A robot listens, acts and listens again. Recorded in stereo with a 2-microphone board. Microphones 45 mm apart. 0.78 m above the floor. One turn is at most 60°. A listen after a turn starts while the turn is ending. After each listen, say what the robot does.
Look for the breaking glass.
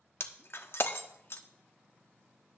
Turn 60° left.
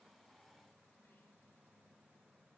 Keep listening.
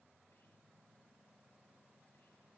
I heard breaking glass, but can't make it out now. It was about straight ahead or 60° left.